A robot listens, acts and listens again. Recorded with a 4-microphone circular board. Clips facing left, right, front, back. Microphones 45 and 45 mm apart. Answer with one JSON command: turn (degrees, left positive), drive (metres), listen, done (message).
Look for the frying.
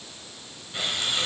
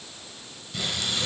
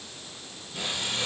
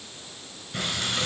{"turn": 155}
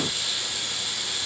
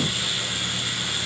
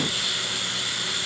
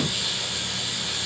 {"turn": -45}
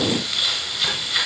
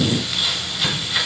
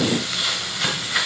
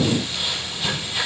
{"done": "Found it: frying, straight ahead, over 4 m away."}